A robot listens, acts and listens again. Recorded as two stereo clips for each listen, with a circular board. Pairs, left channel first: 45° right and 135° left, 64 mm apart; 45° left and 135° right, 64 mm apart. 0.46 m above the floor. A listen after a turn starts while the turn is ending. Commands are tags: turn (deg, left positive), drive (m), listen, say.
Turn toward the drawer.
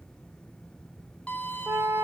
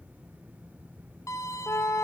<listen/>
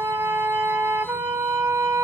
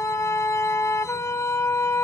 <listen/>
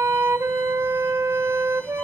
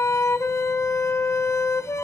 <say>I can't make out a drawer, only a flute and a violin.</say>